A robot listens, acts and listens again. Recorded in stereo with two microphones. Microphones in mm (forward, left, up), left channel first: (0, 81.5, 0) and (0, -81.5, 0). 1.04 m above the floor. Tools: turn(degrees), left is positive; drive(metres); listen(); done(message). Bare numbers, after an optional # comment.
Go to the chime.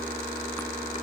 listen()
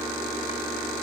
listen()
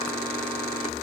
done("I can't make out a chime to turn to.")